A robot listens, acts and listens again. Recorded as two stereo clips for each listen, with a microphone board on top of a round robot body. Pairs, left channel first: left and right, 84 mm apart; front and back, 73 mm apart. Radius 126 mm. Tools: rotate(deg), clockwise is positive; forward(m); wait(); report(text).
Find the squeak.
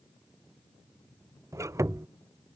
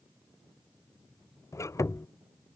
rotate(40)
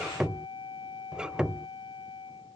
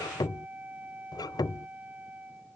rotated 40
rotate(10)
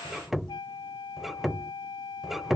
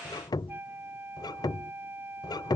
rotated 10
report("Found it: a squeak, straight ahead.")